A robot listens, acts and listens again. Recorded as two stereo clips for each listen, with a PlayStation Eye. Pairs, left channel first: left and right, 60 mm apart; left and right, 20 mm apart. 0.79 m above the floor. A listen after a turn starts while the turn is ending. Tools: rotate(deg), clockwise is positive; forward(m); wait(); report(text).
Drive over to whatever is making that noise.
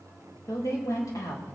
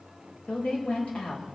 rotate(-65)
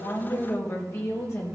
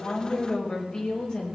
rotate(-45)
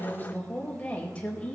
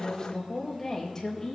rotate(-20)
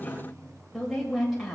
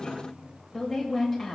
forward(1.0)
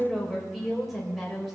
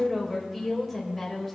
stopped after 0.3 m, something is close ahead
report("Blocked. The woman speaking is further on, straight ahead.")